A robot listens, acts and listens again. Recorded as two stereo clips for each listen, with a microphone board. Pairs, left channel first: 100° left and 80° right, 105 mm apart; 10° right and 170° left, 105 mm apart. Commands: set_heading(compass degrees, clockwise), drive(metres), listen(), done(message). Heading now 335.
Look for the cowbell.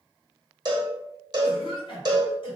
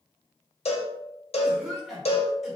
set_heading(5)
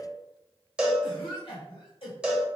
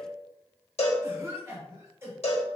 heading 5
done("Facing the cowbell.")